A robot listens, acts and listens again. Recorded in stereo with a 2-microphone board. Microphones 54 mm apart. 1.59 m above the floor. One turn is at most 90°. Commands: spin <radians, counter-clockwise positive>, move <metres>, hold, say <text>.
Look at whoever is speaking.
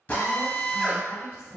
spin 0.96
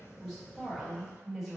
say Found it: a woman speaking, straight ahead.